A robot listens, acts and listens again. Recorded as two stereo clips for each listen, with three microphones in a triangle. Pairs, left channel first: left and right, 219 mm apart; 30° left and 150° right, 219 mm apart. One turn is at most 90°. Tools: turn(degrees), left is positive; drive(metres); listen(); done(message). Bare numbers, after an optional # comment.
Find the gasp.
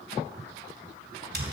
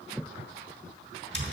listen()
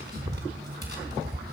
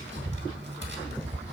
listen()
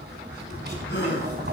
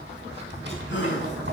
# The gasp: 55° left.
turn(55)
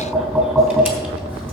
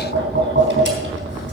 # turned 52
done("I heard a gasp from this way, but can't make it out now.")